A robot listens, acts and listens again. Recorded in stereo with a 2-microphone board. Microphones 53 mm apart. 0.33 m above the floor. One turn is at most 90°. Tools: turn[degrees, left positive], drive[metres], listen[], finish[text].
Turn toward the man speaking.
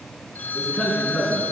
Action: turn[30]
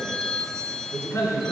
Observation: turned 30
Thought: So it is at 125° left.
Action: turn[90]
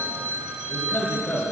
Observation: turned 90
Thought: The man speaking is now 25° left.
Action: turn[25]
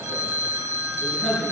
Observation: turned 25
Action: finish[Found it: a man speaking, straight ahead.]